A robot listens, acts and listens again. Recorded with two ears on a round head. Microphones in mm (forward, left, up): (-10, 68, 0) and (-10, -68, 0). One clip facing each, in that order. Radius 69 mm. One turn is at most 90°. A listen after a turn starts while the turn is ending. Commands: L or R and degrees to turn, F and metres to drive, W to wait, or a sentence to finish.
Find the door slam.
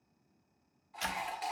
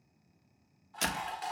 R60
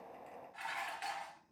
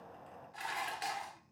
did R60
W
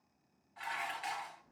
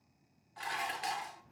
I heard a door slam, but can't make it out now. It was about straight ahead or 60° right.